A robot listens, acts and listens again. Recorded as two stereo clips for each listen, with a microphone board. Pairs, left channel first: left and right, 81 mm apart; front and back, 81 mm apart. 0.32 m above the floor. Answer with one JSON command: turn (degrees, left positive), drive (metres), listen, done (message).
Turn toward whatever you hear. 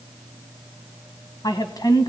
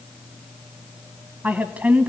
{"turn": 110}
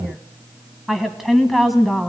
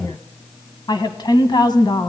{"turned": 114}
{"done": "Facing the woman speaking, 1 to 2 m away."}